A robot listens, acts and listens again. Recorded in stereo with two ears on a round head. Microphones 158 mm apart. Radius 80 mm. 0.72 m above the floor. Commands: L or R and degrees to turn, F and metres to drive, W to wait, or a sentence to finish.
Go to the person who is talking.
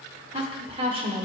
R35
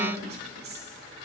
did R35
R110
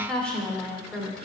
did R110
F1.0
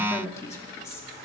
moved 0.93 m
L20
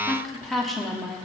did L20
F1.0
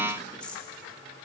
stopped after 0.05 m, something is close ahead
L10
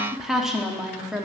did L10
I am next to the woman speaking.